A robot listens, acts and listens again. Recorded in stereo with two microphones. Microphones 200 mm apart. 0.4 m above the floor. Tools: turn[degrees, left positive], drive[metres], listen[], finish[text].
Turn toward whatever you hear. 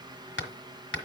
Action: turn[90]
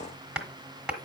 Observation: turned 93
Action: finish[Facing the hammering.]